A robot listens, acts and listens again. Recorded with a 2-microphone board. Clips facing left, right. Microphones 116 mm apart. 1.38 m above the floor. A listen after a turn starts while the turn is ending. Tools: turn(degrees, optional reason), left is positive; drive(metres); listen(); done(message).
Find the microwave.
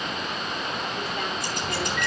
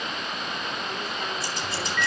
turn(degrees=30)
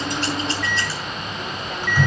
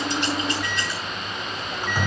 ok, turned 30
turn(degrees=-20, reason="So it is at 20° right.")
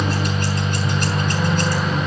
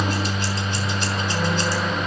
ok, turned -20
done("Facing the microwave, over 4 m away.")